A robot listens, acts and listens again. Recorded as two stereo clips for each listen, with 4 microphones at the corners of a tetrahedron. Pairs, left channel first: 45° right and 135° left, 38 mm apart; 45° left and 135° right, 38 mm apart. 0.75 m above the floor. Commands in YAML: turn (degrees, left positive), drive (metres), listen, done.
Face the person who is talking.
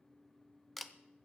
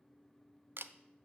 listen: true
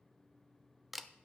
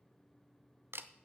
listen: true
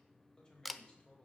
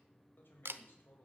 turn: 20
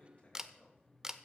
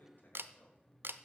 listen: true
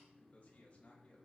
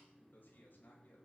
done: "Facing the man speaking, over 4 m away."